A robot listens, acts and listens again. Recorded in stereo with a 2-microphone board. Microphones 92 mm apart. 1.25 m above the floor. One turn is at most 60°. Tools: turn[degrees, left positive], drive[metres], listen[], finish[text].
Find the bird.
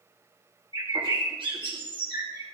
Thought: The bird: about 65° right or 115° right.
Action: turn[-60]
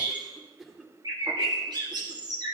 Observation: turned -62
Thought: So it is at 50° right.
Action: turn[-50]
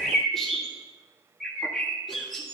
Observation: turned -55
Action: finish[Found it: a bird, straight ahead.]